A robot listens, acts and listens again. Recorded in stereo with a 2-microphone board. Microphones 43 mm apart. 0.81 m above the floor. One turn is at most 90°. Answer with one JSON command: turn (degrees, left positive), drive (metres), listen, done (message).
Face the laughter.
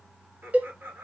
{"turn": -65}
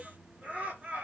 {"turn": -35}
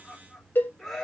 {"done": "Found it: laughter, straight ahead, 1 to 2 m away."}